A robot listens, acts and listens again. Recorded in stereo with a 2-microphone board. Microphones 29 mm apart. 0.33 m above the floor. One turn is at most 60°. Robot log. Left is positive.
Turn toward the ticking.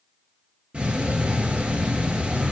note: The ticking: about 35° right or 145° right.
cmd yaw -35
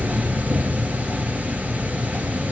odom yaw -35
note: So it is at 115° right.
cmd yaw -60
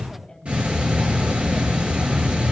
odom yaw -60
note: The ticking is now 45° right.
cmd yaw -45
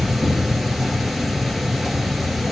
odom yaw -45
end: Facing the ticking.